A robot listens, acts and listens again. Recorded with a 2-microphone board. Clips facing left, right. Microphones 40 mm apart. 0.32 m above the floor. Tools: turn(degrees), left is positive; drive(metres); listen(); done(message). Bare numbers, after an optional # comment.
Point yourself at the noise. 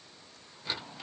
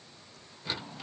listen()
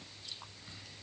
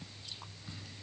listen()
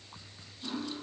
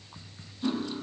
# The cutlery clinking: about 25° right or 155° right.
turn(-25)
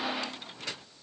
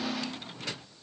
done("Found it: cutlery clinking, straight ahead.")